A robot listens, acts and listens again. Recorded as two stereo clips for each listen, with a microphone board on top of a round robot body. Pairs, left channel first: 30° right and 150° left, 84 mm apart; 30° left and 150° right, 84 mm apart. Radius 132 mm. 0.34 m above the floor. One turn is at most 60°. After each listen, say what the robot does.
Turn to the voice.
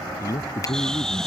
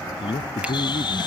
Turn 20° left.
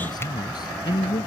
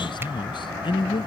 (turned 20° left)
Facing the man speaking.